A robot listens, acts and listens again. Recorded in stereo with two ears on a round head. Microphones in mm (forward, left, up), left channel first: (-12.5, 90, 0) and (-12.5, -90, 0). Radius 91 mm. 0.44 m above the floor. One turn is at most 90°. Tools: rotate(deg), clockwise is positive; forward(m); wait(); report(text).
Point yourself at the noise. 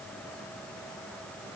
wait()
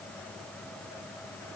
wait()
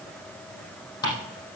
rotate(-20)
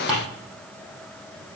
report("Facing the ticking, over 4 m away.")